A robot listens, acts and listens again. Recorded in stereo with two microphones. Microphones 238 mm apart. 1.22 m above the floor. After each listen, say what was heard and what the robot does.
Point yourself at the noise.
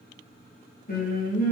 The singing: about 35° left or 145° left. Turn 35° left.
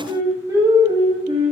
So it is at 25° right. Turn 25° right.
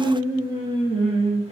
The singing is now 25° right. Turn 25° right.
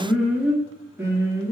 The singing is now 15° right. Turn 15° right.
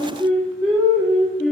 Facing the singing, 2 to 4 m away.